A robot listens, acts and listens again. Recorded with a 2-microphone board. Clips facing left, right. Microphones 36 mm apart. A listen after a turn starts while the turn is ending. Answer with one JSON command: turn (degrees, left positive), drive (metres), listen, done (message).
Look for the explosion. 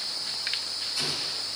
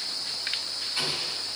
{"turn": -35}
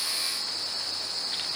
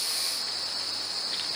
{"listen": true}
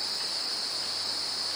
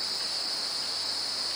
{"done": "I heard an explosion, but can't make it out now. It was about straight ahead or 110° right."}